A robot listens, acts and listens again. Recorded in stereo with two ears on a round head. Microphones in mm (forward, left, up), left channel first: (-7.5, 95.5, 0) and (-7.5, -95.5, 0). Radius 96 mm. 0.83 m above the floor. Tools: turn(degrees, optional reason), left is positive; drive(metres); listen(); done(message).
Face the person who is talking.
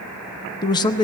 turn(degrees=20, reason="The man speaking: about 20° left or 160° left.")
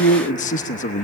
turn(degrees=140, reason="So it is at 140° left.")
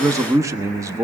turn(degrees=-15, reason="The man speaking is now 15° right.")
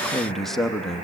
done("Facing the man speaking.")